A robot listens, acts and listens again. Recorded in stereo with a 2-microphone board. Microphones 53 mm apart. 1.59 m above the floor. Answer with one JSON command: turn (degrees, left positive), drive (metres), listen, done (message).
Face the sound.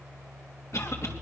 {"turn": 60}
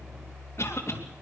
{"turn": 55}
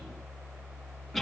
{"done": "Found it: a cough, straight ahead, 2 to 4 m away."}